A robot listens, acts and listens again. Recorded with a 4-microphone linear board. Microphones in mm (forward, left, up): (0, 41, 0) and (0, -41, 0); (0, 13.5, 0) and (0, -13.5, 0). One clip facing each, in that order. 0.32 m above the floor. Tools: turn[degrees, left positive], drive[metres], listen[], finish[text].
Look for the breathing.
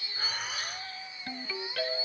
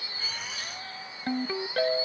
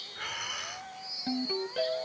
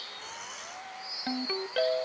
Thought: The breathing: about 50° left or 130° left.
Action: turn[50]
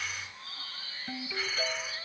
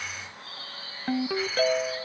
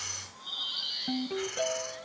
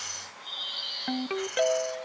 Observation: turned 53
Action: listen[]
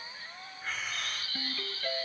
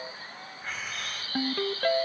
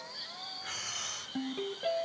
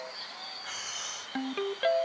Action: finish[Found it: breathing, straight ahead, 1 to 2 m away.]